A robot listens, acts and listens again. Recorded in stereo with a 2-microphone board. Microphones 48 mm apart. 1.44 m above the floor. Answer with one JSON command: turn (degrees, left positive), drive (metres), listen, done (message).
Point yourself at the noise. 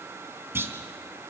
{"turn": -50}
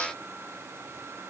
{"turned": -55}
{"listen": true}
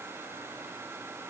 {"done": "I heard a clunk, but can't make it out now. It was about 5° left or 75° right."}